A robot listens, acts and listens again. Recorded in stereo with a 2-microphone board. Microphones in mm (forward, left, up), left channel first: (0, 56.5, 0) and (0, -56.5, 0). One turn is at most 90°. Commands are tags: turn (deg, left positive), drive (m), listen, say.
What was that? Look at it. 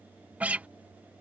<turn deg="-30"/>
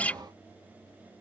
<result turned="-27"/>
<turn deg="15"/>
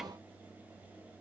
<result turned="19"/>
<listen/>
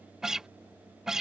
<say>Found it: a guitar, straight ahead.</say>